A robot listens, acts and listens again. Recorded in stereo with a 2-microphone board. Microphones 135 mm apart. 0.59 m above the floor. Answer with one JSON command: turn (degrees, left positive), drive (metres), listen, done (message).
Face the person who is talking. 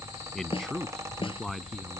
{"turn": 30}
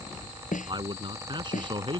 {"turn": -35}
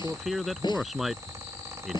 {"done": "Facing the man speaking."}